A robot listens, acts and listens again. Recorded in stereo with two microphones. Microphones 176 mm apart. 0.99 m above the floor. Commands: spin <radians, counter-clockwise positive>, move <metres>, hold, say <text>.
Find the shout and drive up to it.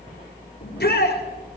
spin 1.22
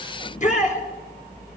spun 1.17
spin 0.79
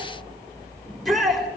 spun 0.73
move 1.0
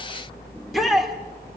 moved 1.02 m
move 1.0
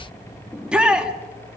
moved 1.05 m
move 1.0
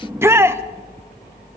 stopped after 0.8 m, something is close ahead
spin -0.26
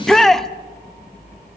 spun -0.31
say I am next to the shout.